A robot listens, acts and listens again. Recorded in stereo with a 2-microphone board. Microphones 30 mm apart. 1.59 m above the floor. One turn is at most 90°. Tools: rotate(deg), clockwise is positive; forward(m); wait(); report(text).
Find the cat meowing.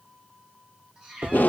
rotate(30)
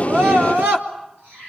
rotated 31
rotate(90)
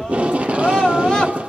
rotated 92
rotate(20)
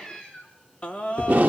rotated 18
rotate(-20)
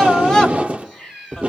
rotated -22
report("Facing the cat meowing.")